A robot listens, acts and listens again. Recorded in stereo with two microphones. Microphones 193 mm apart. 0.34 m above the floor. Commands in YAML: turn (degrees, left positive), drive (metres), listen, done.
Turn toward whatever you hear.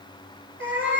turn: -90
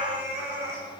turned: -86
turn: -15
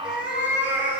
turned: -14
turn: -10
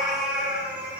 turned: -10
turn: -10
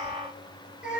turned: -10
done: "Found it: a cat meowing, straight ahead."